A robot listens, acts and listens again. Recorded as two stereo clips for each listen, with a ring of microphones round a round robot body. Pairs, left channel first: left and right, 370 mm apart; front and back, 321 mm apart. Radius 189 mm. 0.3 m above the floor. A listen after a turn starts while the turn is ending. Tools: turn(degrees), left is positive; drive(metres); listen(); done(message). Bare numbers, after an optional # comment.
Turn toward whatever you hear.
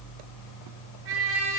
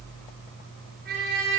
# The trumpet: 115° right.
turn(-115)
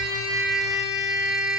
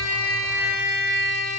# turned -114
done("Facing the trumpet, over 4 m away.")